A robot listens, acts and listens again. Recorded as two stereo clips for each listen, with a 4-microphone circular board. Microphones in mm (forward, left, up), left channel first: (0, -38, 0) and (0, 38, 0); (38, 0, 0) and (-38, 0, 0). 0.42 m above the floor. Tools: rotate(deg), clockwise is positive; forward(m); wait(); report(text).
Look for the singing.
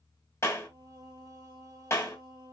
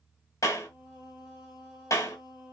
rotate(-105)
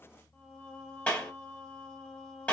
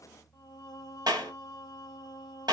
rotate(20)
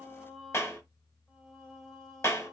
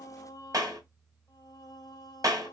report("Facing the singing, 1 to 2 m away.")